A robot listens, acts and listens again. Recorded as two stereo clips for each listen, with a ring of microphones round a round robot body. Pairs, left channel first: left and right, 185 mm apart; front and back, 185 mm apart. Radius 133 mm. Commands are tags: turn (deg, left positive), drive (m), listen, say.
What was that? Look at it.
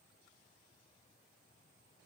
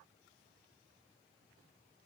<listen/>
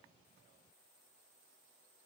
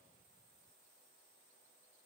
<listen/>
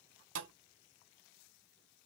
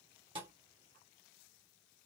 <turn deg="-105"/>
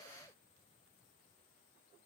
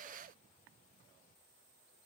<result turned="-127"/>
<turn deg="20"/>
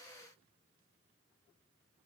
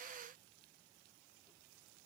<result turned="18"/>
<say>Facing where the thud came from. I can't hear it now.</say>